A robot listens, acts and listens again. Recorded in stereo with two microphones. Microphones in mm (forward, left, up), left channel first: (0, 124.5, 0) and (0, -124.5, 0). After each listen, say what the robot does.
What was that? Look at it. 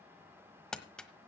Turn 30° left.
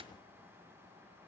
Keep listening.
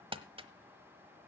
Turn 25° right.
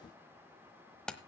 Facing the crumpling, 1 to 2 m away.